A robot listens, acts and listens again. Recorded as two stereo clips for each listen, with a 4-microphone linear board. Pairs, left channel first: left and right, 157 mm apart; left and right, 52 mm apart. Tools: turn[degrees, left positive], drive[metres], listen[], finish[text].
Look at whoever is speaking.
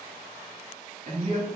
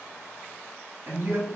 Thought: The man speaking: about 50° right or 130° right.
Action: turn[-50]
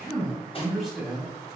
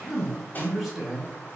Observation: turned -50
Action: finish[Facing the man speaking.]